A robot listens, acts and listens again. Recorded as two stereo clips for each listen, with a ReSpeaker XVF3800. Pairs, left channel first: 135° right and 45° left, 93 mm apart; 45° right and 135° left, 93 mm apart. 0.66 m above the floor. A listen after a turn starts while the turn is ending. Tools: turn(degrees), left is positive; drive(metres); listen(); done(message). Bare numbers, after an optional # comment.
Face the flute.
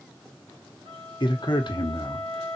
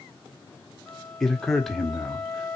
# The flute: 45° left.
turn(45)
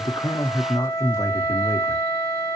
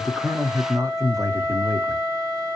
# The flute is now 10° right.
turn(-10)
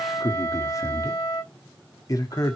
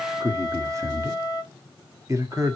done("Found it: a flute, straight ahead.")